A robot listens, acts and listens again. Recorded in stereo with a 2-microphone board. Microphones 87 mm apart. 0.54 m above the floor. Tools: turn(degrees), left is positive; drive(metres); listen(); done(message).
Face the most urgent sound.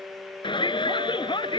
turn(degrees=70)
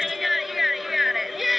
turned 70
done("Facing the shout.")